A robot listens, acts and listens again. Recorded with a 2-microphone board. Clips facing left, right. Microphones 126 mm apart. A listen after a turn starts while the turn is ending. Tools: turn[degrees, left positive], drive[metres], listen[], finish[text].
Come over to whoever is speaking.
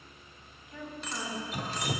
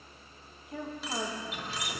Thought: The woman speaking: about 55° right or 125° right.
Action: turn[-55]
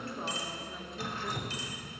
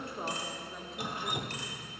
Action: drive[1.0]
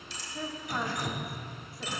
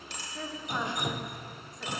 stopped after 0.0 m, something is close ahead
Action: finish[Something is in my way. I am facing the woman speaking but have not reached it.]